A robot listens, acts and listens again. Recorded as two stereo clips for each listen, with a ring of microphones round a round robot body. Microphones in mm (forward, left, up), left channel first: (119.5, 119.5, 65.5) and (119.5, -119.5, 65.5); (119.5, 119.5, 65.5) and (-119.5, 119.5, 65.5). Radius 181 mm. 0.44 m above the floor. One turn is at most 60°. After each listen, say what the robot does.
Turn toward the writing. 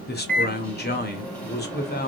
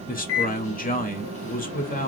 Keep listening.
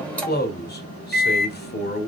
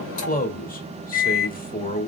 Keep listening.
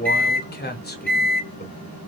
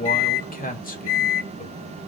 I can't make out writing to turn to.